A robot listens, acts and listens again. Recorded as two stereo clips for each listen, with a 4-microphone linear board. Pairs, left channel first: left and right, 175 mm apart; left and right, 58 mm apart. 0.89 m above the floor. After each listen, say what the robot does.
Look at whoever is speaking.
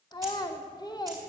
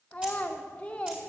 Turn 25° left.
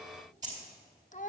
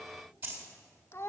Turn 135° left.
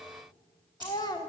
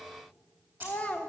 Turn 25° left.
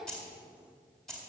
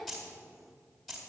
Keep listening.
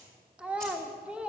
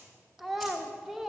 Found it: a child speaking, straight ahead, 1 to 2 m away.